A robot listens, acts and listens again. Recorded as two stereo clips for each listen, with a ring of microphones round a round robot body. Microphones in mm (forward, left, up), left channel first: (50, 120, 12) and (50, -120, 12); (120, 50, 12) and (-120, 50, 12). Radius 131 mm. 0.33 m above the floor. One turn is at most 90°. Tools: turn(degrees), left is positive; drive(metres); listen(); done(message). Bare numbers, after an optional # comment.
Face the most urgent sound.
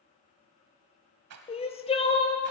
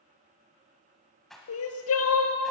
# The crying: 25° left.
turn(25)
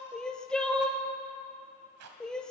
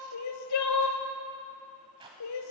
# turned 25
done("Facing the crying, 1 to 2 m away.")